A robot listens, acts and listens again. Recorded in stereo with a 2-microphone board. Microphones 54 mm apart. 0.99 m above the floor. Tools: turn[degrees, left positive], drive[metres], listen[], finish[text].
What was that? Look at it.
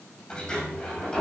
Action: turn[30]
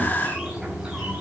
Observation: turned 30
Thought: So it is at 15° right.
Action: turn[-15]
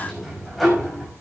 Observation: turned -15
Action: finish[Facing the sliding door, over 4 m away.]